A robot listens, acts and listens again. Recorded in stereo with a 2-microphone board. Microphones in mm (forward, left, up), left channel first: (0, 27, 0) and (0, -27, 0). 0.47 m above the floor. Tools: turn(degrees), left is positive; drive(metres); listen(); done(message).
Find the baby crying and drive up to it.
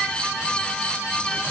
listen()
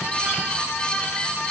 listen()
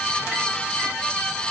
done("I can't make out a baby crying.")